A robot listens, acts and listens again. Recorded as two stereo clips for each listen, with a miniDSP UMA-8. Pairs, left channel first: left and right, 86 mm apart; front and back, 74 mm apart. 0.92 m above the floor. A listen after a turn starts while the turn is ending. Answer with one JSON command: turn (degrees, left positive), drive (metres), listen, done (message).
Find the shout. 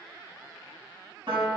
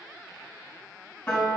{"listen": true}
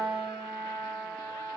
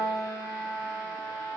{"listen": true}
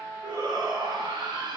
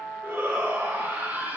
{"turn": -110}
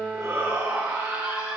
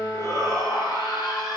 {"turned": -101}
{"turn": -10}
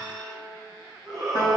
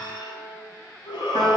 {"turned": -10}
{"done": "Facing the shout, 2 to 4 m away."}